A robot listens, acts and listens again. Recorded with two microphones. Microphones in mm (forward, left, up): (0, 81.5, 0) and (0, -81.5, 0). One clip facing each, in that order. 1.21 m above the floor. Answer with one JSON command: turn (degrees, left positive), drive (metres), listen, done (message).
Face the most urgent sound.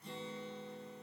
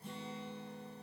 {"listen": true}
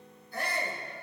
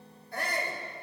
{"turn": -75}
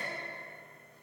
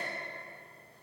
{"listen": true}
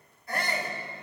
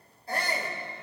{"turn": -30}
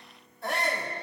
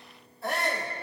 {"done": "Facing the shout, 2 to 4 m away."}